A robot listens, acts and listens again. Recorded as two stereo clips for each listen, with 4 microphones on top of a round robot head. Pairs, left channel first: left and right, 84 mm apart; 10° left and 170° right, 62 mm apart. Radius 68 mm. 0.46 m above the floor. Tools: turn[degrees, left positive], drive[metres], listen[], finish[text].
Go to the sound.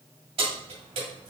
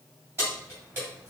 Thought: The keys jangling: 105° right.
Action: turn[-105]
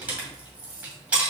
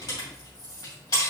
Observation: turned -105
Thought: The keys jangling is now 20° right.
Action: turn[-20]
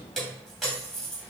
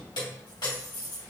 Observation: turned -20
Action: drive[1.0]
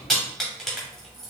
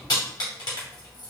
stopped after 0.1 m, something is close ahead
Action: finish[Something is in my way. I am facing the keys jangling but have not reached it.]